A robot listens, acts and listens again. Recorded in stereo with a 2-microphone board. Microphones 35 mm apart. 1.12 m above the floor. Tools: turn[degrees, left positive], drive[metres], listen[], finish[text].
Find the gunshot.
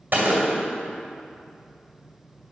Thought: The gunshot: about 65° right or 115° right.
Action: turn[-65]
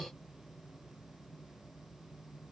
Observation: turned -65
Action: listen[]
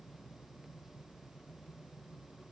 Action: finish[I heard a gunshot, but can't make it out now. It was about straight ahead or 50° right.]